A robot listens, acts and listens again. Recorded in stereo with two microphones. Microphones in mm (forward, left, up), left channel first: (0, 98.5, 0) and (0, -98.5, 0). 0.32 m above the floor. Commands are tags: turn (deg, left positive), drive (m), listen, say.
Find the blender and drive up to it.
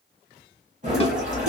<turn deg="-40"/>
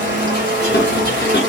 <turn deg="-100"/>
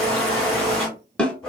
<drive m="1.0"/>
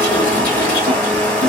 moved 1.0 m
<turn deg="10"/>
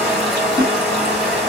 <drive m="1.0"/>
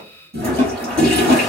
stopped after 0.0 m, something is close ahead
<say>I am next to the blender.</say>